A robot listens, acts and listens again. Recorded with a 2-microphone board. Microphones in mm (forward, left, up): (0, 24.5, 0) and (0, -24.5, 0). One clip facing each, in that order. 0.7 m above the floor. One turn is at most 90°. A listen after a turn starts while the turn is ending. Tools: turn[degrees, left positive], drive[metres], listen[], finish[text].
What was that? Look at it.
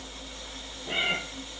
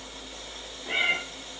Thought: The cat meowing: about 35° right or 145° right.
Action: turn[-35]
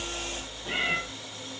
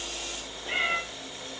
Action: finish[Found it: a cat meowing, straight ahead.]